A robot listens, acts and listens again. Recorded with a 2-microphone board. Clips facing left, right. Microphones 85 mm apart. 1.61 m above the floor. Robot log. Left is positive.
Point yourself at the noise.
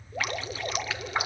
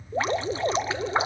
note: The dripping: about 25° right or 155° right.
cmd yaw -25
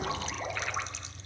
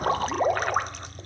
note: So it is at 135° right.
cmd yaw -135
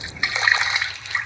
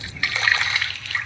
note: The dripping is now 20° left.
cmd yaw +20
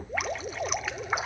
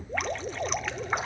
end: Facing the dripping.